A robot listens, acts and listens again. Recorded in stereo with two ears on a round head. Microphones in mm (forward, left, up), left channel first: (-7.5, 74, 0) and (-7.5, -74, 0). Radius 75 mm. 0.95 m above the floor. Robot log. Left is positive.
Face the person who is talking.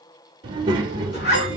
note: The child speaking: about 30° right or 150° right.
cmd yaw -30
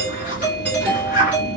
note: So it is at 120° right.
cmd yaw -120
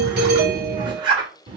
note: The child speaking is now 30° right.
cmd yaw -30
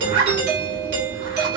cmd idle
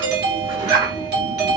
note: The child speaking is now 25° right.
cmd yaw -25
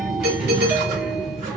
end: Found it: a child speaking, straight ahead.